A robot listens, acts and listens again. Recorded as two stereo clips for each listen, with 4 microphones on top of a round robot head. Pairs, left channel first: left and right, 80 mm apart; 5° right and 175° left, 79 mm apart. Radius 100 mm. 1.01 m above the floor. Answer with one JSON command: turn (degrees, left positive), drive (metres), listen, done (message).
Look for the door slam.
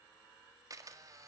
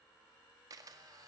{"listen": true}
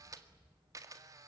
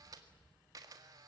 {"listen": true}
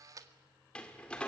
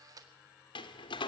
{"turn": 10}
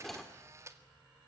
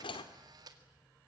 {"done": "Found it: a door slam, straight ahead."}